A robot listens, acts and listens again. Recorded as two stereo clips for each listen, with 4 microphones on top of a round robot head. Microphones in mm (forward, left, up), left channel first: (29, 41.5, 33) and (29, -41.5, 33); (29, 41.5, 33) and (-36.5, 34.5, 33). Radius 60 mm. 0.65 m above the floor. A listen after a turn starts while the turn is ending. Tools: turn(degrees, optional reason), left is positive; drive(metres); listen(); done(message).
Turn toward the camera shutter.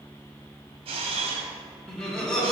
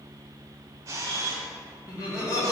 turn(degrees=-115, reason="The camera shutter: 115° right.")
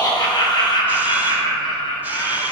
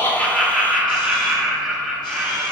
listen()
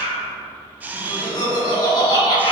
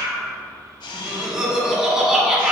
turn(degrees=-15, reason="The camera shutter is now 15° right.")
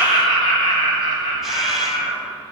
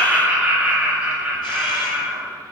listen()
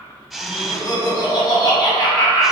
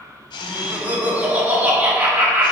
done("Facing the camera shutter, under 1 m away.")